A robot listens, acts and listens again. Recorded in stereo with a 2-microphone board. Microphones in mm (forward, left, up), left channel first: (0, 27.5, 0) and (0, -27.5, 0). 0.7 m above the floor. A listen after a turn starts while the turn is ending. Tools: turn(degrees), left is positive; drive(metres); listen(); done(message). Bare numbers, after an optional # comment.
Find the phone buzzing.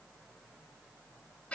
listen()
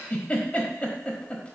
listen()
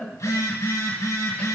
turn(90)
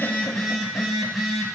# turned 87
done("Facing the phone buzzing, 1 to 2 m away.")